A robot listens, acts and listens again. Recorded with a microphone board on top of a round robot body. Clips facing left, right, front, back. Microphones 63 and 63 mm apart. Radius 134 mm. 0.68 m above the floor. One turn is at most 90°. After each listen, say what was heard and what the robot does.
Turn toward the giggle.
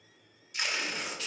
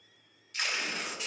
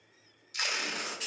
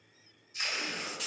Keep listening.
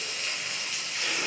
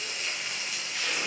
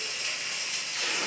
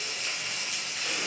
Keep listening.
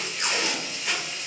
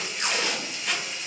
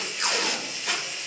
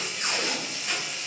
I can't make out a giggle, only tape being pulled and frying.